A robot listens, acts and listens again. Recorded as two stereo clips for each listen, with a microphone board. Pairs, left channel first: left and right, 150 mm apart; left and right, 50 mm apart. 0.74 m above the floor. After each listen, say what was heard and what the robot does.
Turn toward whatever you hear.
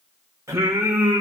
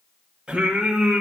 The singing: about 20° right or 160° right. Turn 20° right.
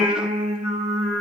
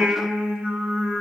So it is at 140° right. Turn 140° right.
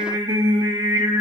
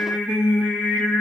The singing is now 25° right. Turn 25° right.
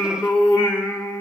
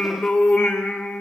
The singing is now 10° left. Turn 10° left.
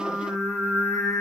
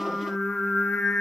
Facing the singing, 1 to 2 m away.